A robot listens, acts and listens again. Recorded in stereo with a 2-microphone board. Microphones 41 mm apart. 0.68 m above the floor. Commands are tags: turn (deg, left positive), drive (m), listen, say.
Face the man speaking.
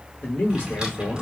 <turn deg="60"/>
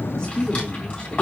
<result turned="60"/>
<turn deg="20"/>
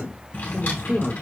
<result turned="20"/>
<say>Facing the man speaking, 1 to 2 m away.</say>